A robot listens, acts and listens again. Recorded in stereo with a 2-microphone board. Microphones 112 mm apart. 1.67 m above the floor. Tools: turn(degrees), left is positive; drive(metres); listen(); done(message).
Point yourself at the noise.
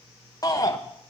turn(degrees=30)
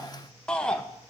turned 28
turn(degrees=10)
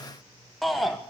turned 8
done("Facing the shout, 1 to 2 m away.")